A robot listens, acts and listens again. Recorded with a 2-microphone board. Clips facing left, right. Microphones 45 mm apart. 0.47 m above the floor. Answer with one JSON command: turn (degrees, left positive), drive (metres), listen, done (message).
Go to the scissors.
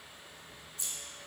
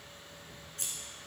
{"turn": -60}
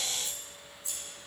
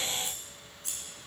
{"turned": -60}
{"turn": -60}
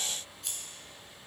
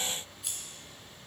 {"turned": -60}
{"drive": 1.0}
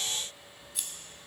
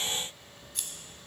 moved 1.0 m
{"drive": 1.0}
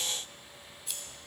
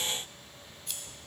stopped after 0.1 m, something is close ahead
{"done": "Arrived at the scissors, straight ahead."}